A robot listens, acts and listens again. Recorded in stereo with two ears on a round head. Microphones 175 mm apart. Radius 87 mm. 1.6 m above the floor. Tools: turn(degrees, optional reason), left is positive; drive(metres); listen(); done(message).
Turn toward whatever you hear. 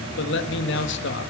turn(degrees=65, reason="The man speaking: about 65° left or 115° left.")
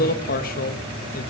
turn(degrees=50, reason="So it is at 50° left.")
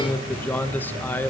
turn(degrees=10, reason="The man speaking is now 10° left.")
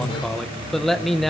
done("Facing the man speaking.")